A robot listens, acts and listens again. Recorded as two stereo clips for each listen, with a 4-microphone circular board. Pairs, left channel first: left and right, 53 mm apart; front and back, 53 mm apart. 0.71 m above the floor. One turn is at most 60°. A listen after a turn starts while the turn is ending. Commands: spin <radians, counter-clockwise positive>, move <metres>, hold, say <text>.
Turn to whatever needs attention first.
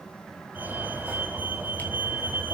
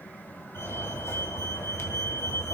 spin -0.61
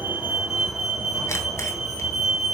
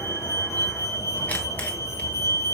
say Facing the fire alarm.